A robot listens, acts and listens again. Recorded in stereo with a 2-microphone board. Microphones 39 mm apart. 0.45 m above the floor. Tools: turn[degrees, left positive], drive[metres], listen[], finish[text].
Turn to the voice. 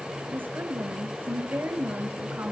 Thought: The woman speaking: about 60° right or 120° right.
Action: turn[-60]
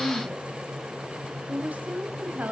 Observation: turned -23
Thought: So it is at 45° right.
Action: turn[-45]
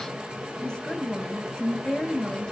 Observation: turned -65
Thought: The woman speaking is now 20° left.
Action: turn[20]
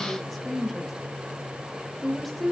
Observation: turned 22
Action: finish[Found it: a woman speaking, straight ahead, 2 to 4 m away.]